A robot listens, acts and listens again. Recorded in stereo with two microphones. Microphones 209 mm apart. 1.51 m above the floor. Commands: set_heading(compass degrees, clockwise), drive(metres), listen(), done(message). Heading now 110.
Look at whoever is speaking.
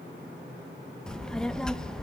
set_heading(80)
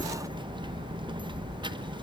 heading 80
set_heading(105)
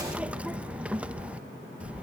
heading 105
done("Found it: a child speaking, straight ahead.")